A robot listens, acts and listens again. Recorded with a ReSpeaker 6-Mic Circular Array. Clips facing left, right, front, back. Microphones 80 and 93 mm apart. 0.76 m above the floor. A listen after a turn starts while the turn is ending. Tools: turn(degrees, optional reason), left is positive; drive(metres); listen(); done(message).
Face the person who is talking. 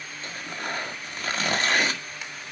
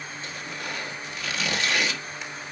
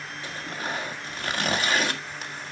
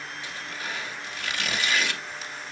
listen()
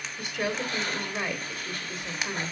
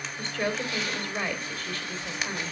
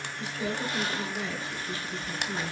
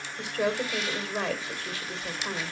turn(degrees=165, reason="The woman speaking: 165° left.")
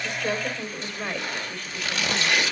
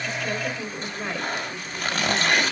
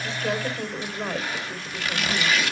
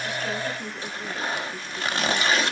turn(degrees=-10, reason="The woman speaking is now 10° right.")
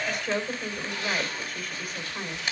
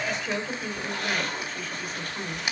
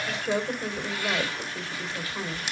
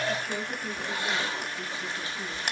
done("Found it: a woman speaking, straight ahead.")